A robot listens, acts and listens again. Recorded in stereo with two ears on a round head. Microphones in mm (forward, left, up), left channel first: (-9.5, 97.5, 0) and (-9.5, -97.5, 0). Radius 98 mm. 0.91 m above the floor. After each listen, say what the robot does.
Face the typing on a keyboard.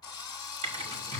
Turn 25° right.
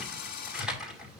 Found it: typing on a keyboard, straight ahead.